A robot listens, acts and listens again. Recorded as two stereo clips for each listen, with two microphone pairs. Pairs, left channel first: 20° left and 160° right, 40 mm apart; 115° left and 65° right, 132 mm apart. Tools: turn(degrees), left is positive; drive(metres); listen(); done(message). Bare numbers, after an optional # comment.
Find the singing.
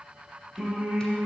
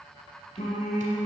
# The singing: 130° left.
turn(130)
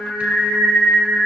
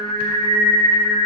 # The singing is now 20° right.
turn(-20)
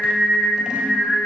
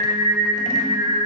done("Facing the singing.")